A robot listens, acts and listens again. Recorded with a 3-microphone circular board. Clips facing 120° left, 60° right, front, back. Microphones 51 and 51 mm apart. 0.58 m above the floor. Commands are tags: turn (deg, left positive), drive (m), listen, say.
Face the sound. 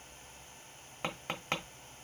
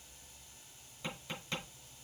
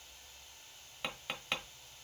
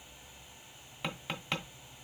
<turn deg="90"/>
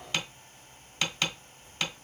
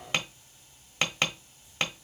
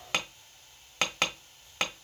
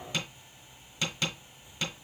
<say>Facing the tapping.</say>